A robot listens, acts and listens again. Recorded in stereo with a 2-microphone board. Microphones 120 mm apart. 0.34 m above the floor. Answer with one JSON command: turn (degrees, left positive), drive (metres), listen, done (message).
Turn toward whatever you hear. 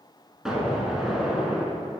{"turn": -30}
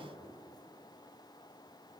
{"listen": true}
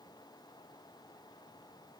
{"done": "I heard an explosion, but can't make it out now. It was about 25° left or 145° right."}